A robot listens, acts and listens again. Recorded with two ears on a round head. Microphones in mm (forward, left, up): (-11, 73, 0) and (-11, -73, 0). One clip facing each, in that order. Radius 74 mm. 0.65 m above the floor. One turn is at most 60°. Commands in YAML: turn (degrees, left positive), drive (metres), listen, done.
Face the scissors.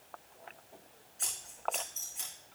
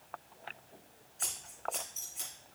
turn: 30
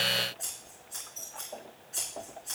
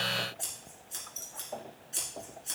turn: -30
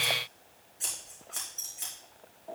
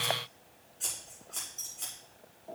turn: 10
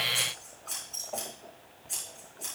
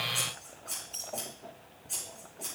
done: "Facing the scissors."